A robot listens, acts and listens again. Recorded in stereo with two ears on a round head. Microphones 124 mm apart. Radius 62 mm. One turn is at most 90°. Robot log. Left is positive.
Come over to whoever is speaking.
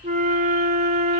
cmd idle
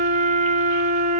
cmd idle
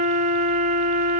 end: I can't make out anyone speaking to turn to.